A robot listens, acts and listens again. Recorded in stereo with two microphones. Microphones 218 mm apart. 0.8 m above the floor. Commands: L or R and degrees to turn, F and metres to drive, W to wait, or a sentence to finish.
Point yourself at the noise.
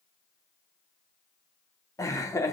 L30
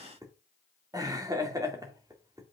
R20
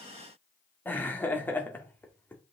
L10
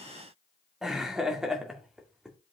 Facing the laughter.